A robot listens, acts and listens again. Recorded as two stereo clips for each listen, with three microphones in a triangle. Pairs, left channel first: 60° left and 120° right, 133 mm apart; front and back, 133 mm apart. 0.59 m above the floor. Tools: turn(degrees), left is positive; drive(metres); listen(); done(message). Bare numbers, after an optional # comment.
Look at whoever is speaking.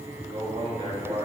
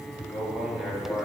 # The man speaking: 95° right.
turn(-95)
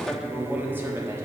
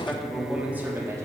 # The man speaking is now 150° right.
turn(-150)
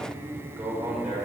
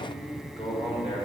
# The man speaking is now 45° right.
turn(-45)
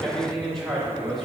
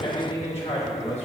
# The man speaking is now 25° right.
turn(-25)
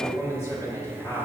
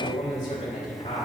# The man speaking is now 10° right.
turn(-10)
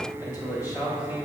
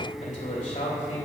done("Facing the man speaking, 2 to 4 m away.")